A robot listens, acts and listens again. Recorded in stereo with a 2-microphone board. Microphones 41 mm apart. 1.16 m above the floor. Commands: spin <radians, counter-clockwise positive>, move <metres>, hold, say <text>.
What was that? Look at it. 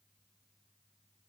hold
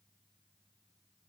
hold
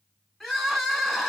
spin -0.52
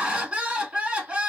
spin -2.53
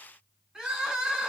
spin -0.17
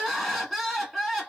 say Facing the crying.